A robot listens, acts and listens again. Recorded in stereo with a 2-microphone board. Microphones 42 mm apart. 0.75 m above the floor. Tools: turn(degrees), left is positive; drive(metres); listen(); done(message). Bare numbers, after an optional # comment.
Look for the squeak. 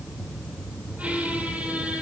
# The squeak: about 35° right or 145° right.
turn(-35)
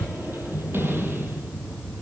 # So it is at 115° right.
turn(-115)
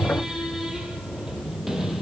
# The squeak is now 10° right.
turn(-10)
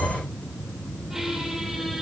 # The squeak is now 10° right.
turn(-10)
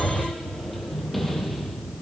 done("Found it: a squeak, straight ahead, over 4 m away.")